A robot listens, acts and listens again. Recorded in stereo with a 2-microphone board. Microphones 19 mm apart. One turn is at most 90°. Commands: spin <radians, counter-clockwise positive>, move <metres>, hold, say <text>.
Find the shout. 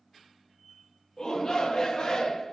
spin 0.70
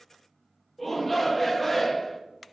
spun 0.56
spin 0.17
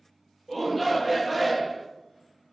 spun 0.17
say Found it: a shout, straight ahead, under 1 m away.